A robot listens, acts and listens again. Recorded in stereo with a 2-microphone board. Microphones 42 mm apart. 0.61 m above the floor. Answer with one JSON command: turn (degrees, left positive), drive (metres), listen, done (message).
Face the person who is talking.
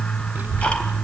{"turn": -40}
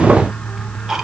{"listen": true}
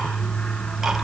{"listen": true}
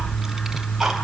{"done": "Facing the child speaking."}